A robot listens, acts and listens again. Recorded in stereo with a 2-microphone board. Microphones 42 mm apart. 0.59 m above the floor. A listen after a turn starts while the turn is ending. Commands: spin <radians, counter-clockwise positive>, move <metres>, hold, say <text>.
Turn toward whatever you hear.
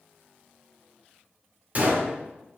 spin -0.61
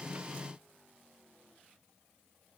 hold
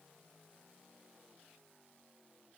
say I heard a gunshot, but can't make it out now. It was about straight ahead or 110° right.